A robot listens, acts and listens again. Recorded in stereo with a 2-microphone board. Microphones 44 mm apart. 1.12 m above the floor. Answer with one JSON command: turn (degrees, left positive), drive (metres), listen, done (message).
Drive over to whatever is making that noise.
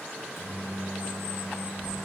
{"turn": 75}
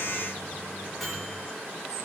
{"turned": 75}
{"drive": 1.0}
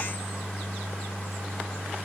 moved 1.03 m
{"drive": 1.0}
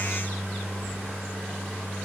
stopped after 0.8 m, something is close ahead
{"done": "Arrived at the microwave, straight ahead."}